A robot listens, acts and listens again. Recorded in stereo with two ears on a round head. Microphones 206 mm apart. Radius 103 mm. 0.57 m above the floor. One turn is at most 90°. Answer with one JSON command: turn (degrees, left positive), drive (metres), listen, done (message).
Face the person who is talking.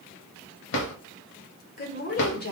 {"turn": 50}
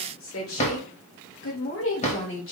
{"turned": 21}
{"turn": 60}
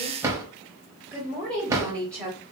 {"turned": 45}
{"done": "Facing the woman speaking, 2 to 4 m away."}